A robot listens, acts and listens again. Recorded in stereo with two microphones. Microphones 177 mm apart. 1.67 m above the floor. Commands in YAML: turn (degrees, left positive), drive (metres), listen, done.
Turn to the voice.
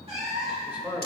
turn: -30
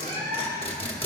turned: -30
listen: true
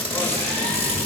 listen: true
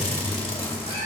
done: "I heard a man speaking, but can't make it out now. It was about 20° left or 140° right."